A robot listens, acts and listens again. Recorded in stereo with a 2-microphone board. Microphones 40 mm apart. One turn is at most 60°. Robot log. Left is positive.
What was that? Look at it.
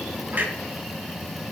note: The clunk: about 50° right or 130° right.
cmd yaw -50
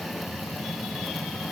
cmd idle
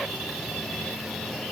end: I heard a clunk, but can't make it out now. It was about straight ahead or 80° right.